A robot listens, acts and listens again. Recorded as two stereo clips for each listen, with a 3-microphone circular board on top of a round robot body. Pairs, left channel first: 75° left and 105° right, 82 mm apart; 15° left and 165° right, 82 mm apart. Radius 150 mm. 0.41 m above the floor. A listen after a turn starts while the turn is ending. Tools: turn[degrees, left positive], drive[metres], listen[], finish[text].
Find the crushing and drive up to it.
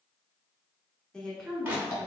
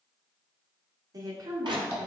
Thought: The crushing: 170° right.
Action: turn[-170]
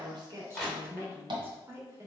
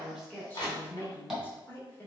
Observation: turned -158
Thought: The crushing is now 15° right.
Action: turn[-15]
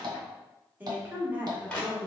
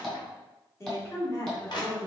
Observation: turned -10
Action: drive[1.0]
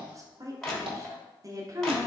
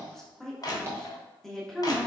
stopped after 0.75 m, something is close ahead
Action: finish[Arrived at the crushing, straight ahead.]